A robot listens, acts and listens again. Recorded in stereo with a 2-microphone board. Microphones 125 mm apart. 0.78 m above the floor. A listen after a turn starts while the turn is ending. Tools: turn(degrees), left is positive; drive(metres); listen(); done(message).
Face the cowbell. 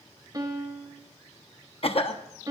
listen()
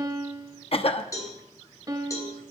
turn(degrees=25)
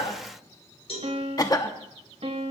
turn(degrees=130)
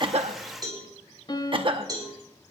turn(degrees=-35)
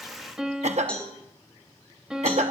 turn(degrees=10)
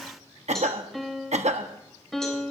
listen()
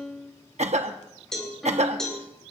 done("Facing the cowbell.")